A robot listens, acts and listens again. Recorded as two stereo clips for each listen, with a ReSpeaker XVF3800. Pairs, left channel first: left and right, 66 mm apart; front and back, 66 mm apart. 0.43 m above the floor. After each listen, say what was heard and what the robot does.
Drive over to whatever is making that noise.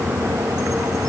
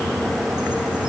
Keep listening.
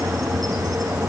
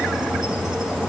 Keep listening.
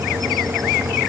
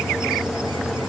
I can't make out anything.